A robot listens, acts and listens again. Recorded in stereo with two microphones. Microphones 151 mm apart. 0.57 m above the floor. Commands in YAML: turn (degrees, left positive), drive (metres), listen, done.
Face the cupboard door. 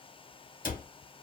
turn: 60
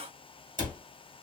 turn: 60
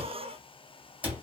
turn: -10
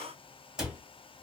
done: "Facing the cupboard door, under 1 m away."